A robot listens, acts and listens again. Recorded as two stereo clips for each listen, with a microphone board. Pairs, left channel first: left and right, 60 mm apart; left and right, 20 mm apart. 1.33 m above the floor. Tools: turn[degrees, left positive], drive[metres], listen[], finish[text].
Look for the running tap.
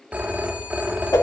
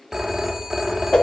Action: listen[]
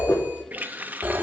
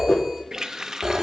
Thought: The running tap: about 30° right or 150° right.
Action: turn[-30]
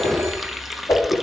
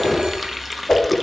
Action: finish[Found it: a running tap, straight ahead, under 1 m away.]